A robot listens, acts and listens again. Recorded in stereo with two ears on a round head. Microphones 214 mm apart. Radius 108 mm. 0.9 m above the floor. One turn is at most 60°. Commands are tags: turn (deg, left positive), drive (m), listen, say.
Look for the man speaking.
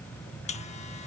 <listen/>
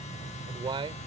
<turn deg="-20"/>
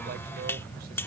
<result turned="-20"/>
<listen/>
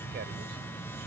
<listen/>
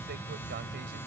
<say>I heard a man speaking, but can't make it out now. It was about straight ahead or 140° right.</say>